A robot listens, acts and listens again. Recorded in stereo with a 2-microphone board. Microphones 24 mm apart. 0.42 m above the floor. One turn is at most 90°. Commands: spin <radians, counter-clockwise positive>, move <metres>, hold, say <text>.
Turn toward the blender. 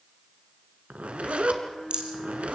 spin 0.79
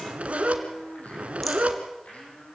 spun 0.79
spin 1.57
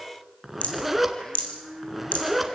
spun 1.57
spin 0.44
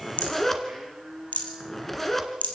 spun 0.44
spin 0.17
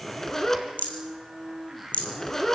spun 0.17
say Facing the blender.